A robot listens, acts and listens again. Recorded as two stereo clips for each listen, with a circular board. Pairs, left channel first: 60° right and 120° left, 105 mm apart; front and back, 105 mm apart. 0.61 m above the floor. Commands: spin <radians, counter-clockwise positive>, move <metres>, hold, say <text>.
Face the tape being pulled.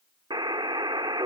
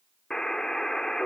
hold
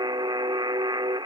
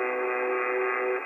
hold
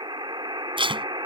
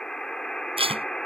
spin 2.71
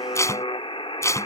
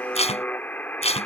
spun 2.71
say Found it: tape being pulled, straight ahead.